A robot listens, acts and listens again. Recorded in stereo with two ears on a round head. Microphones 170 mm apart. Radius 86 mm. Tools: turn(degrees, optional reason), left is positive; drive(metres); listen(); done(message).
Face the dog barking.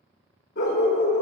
turn(degrees=60, reason="The dog barking: about 60° left or 120° left.")
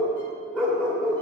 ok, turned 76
done("Found it: a dog barking, straight ahead.")